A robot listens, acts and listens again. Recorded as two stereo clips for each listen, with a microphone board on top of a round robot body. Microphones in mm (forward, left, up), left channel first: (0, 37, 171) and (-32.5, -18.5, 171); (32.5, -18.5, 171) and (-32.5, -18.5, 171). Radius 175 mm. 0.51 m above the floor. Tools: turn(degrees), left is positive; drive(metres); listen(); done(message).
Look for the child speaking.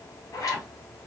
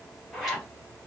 listen()
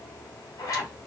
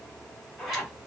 listen()
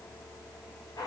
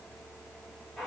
done("I can't make out a child speaking to turn to.")